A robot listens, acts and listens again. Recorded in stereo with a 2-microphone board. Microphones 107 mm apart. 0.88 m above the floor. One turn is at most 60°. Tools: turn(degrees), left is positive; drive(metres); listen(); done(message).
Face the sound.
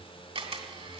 turn(degrees=-60)
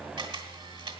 turn(degrees=-45)
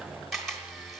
done("Facing the camera shutter, 1 to 2 m away.")